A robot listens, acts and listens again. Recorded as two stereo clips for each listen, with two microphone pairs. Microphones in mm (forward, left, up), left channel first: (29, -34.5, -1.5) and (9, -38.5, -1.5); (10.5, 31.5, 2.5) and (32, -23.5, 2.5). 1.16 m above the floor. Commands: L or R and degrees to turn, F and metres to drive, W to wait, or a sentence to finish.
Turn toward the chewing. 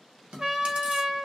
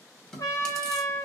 R165
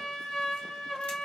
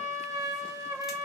W
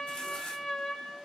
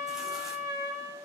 W
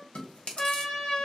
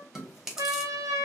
L15
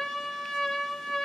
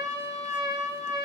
W
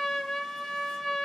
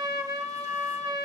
W
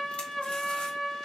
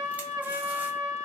I heard chewing from this way, but can't make it out now.